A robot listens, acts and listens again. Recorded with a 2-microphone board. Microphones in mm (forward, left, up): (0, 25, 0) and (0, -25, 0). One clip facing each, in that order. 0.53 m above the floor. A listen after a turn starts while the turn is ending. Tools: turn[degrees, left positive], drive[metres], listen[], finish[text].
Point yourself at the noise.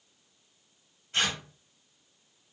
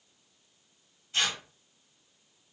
Thought: The tearing paper: about 50° left or 130° left.
Action: turn[50]
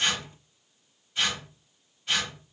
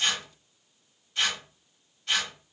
Thought: So it is at 10° left.
Action: turn[10]
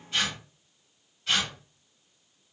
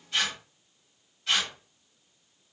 Action: finish[Facing the tearing paper, 1 to 2 m away.]